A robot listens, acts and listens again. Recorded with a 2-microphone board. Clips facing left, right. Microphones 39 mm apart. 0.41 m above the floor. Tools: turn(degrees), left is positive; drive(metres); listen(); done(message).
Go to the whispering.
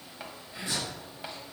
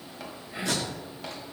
turn(degrees=-25)
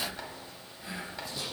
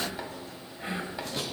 turn(degrees=-125)
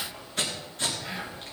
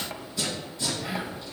turn(degrees=-10)
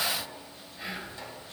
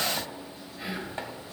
drive(metres=1.0)
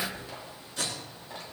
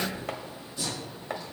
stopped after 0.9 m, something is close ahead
done("I am next to the whispering.")